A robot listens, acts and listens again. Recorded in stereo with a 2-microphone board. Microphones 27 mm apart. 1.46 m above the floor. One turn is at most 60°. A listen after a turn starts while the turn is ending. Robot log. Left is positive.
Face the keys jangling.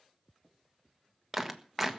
cmd idle
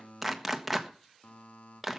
cmd idle
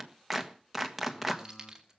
note: The keys jangling: about 20° right or 160° right.
cmd yaw -20
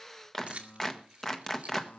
note: So it is at 130° right.
cmd yaw -60
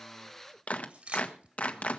note: The keys jangling is now 60° right.
cmd yaw -60
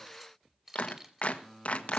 note: The keys jangling is now 20° right.
cmd yaw -20
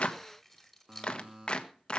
end: Facing the keys jangling.